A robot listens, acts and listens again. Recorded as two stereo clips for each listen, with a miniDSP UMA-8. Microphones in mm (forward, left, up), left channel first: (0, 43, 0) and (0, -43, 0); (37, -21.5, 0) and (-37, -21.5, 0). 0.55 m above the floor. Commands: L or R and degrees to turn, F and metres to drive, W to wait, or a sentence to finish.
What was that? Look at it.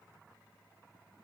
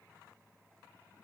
W
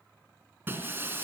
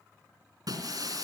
R155
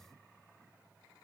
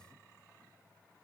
Facing where the breaking glass came from. I can't hear it now.